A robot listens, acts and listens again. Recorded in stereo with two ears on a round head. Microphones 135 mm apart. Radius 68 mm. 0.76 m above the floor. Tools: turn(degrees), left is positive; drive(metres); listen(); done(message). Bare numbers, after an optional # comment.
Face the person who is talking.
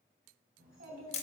# The child speaking: about 75° right or 105° right.
turn(-75)
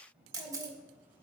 # So it is at 15° right.
turn(-15)
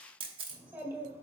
# The child speaking is now 20° right.
turn(-20)
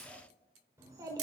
# The child speaking is now 25° right.
turn(-25)
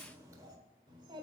# The child speaking is now 30° right.
turn(-30)
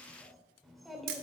done("Found it: a child speaking, straight ahead, 1 to 2 m away.")